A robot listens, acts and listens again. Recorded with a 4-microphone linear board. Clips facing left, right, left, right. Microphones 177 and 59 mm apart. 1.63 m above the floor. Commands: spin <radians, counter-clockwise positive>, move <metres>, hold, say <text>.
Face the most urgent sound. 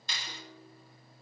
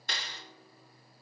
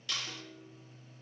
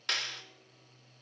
hold
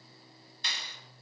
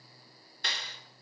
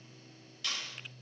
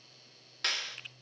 hold
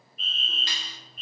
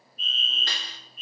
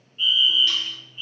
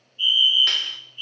spin 1.05
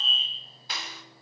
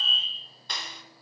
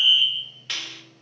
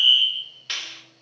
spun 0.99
spin 0.44
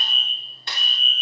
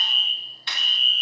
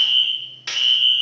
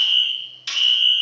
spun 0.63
spin -0.26
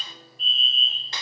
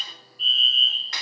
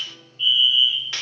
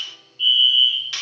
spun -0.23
say Facing the fire alarm, 1 to 2 m away.